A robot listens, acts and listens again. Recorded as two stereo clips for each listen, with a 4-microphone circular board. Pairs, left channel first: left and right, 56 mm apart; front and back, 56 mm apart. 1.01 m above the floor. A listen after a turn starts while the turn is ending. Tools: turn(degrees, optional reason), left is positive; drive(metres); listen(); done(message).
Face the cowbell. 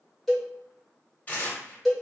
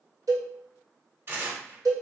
turn(degrees=180, reason="The cowbell: straight behind.")
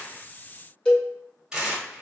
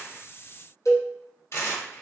turn(degrees=20, reason="The cowbell is now 20° left.")
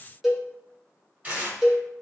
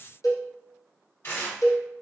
done("Facing the cowbell, under 1 m away.")